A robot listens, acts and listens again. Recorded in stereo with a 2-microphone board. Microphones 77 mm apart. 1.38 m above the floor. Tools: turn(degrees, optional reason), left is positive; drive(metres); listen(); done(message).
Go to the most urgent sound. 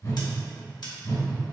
listen()
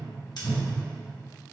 listen()
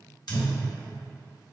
done("I can't make out anything urgent to turn to.")